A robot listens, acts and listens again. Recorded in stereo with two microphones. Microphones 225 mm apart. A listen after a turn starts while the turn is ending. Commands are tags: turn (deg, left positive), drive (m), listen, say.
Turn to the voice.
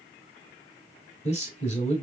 <turn deg="30"/>
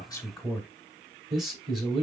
<say>Found it: a man speaking, straight ahead.</say>